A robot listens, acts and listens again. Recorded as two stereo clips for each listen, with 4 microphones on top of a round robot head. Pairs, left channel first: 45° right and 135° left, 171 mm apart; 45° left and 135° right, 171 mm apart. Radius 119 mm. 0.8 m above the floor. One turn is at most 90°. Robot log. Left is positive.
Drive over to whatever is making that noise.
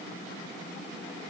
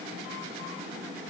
cmd idle
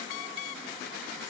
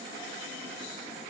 cmd idle
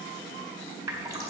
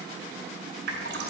note: The dripping: 150° right.
cmd yaw -90
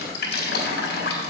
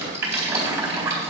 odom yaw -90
note: The dripping is now 60° right.
cmd yaw -60
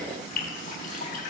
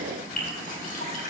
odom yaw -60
cmd fwd 1.0
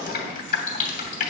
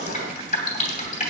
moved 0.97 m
cmd fwd 1.0
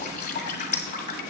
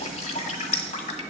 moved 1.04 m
cmd fwd 1.0
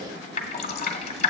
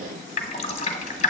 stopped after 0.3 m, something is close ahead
end: Arrived at the dripping, straight ahead.